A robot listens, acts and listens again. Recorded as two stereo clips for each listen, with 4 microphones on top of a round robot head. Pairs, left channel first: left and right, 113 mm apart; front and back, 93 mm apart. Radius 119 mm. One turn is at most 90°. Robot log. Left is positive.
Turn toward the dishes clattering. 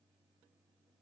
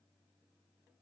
cmd idle
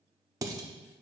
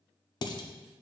note: The dishes clattering: 35° right.
cmd yaw -35
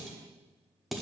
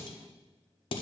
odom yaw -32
end: Facing the dishes clattering, under 1 m away.